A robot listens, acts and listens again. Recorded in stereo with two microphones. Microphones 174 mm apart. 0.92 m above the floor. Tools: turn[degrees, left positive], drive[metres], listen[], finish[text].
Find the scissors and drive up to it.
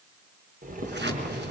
Action: turn[-90]
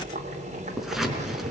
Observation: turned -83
Action: drive[1.0]
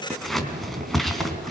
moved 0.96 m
Action: drive[1.0]
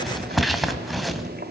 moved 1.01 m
Action: drive[1.0]
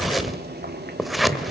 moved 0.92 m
Action: drive[1.0]
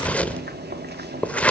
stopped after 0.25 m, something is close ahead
Thought: The scissors is now 10° left.
Action: turn[10]
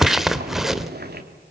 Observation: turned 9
Action: finish[Arrived at the scissors, straight ahead.]